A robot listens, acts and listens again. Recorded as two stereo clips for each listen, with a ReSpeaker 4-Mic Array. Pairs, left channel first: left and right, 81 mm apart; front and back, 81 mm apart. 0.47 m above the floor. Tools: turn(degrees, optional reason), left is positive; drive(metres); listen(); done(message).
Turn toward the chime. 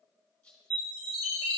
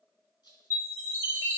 turn(degrees=-120, reason="The chime: 120° right.")
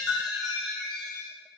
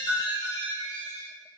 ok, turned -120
done("Found it: a chime, straight ahead.")